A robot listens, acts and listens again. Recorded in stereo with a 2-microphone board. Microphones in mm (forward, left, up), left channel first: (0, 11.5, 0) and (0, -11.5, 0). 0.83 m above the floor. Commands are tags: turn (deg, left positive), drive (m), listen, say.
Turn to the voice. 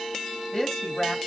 <turn deg="25"/>
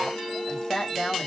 <turn deg="130"/>
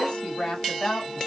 <turn deg="40"/>
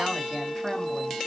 <listen/>
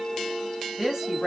<say>Found it: a woman speaking, straight ahead, 1 to 2 m away.</say>